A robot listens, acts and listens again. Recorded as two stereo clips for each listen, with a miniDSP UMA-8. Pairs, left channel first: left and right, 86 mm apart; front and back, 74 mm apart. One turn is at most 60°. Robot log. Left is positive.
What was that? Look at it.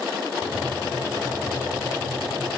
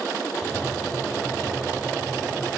note: The tapping: 30° right.
cmd yaw -30
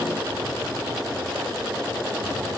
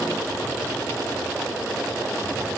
cmd idle
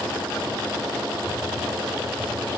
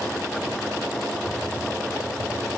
end: Facing the tapping, over 4 m away.